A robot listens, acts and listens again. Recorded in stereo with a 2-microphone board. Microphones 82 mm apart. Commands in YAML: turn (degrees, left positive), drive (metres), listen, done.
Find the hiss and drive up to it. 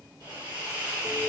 turn: -90
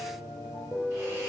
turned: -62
turn: -30
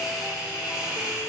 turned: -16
turn: -10
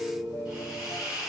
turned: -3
drive: 1.0
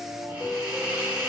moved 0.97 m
turn: -15
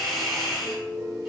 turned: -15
drive: 1.0
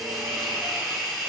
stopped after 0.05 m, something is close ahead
done: "Arrived at the hiss, straight ahead."